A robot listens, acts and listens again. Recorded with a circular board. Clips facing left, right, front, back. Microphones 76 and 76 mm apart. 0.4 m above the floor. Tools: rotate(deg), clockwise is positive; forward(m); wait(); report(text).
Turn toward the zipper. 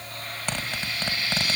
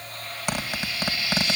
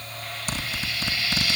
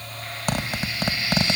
rotate(165)
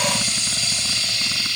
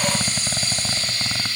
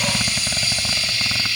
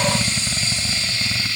rotate(55)
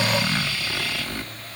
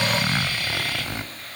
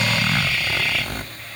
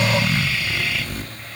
rotate(20)
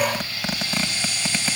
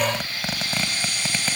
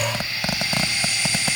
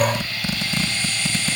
report("Facing the zipper, 1 to 2 m away.")